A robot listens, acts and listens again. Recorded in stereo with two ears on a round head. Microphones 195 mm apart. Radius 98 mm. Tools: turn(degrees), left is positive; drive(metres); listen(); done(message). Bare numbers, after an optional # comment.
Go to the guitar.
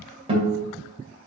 # The guitar: about 25° right or 155° right.
turn(-25)
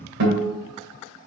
# So it is at 125° right.
turn(-125)
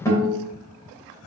# The guitar is now 15° left.
turn(15)
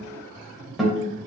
drive(1.0)
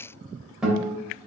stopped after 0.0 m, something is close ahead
done("Something is in my way. I am facing the guitar but have not reached it.")